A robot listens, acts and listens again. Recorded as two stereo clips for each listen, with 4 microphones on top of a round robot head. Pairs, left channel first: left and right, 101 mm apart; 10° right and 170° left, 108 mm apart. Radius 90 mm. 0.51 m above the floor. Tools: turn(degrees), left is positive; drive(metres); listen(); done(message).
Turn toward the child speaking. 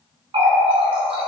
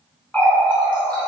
listen()
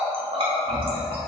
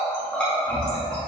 listen()
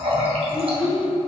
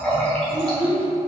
turn(degrees=90)
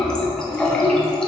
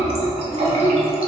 turn(degrees=45)
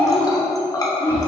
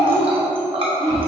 turn(degrees=30)
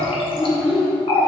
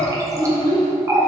done("Found it: a child speaking, straight ahead, 1 to 2 m away.")